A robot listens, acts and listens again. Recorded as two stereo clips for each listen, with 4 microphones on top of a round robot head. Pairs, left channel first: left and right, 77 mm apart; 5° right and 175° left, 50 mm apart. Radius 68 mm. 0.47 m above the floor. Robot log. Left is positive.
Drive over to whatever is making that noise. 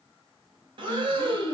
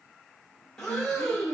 note: The breathing: 80° right.
cmd yaw -80
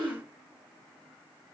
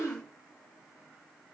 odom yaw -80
note: The breathing is now 10° left.
cmd yaw +10
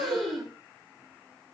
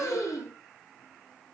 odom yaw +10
cmd fwd 1.0
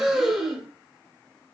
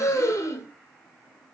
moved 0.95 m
cmd fwd 1.0
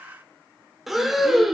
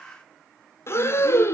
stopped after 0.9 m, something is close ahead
end: I am next to the breathing.